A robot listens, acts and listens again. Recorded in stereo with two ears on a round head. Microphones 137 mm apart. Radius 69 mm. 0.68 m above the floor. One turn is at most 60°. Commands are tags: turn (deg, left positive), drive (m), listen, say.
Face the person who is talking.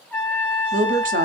<turn deg="-55"/>
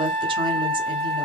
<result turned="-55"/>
<listen/>
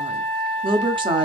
<turn deg="-40"/>
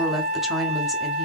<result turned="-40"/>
<say>Facing the woman speaking.</say>